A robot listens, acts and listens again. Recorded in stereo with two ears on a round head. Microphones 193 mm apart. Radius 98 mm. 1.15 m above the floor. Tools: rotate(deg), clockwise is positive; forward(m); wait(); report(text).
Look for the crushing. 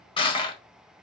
rotate(-20)
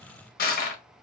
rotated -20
rotate(-140)
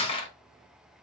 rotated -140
rotate(-25)
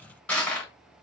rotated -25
report("Found it: crushing, straight ahead, under 1 m away.")